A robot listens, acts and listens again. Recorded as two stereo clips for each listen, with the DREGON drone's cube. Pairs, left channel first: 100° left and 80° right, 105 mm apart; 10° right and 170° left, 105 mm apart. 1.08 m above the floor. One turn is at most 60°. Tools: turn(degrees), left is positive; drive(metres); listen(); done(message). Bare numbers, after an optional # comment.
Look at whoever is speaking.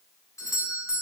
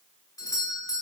listen()
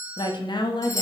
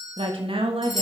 # The woman speaking: 145° left.
turn(60)
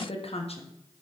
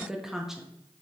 # The woman speaking is now 85° left.
turn(60)
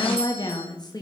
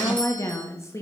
# The woman speaking is now 50° left.
turn(50)
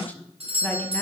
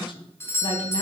# The woman speaking is now 25° left.
turn(25)
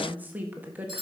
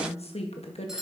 done("Found it: a woman speaking, straight ahead, 1 to 2 m away.")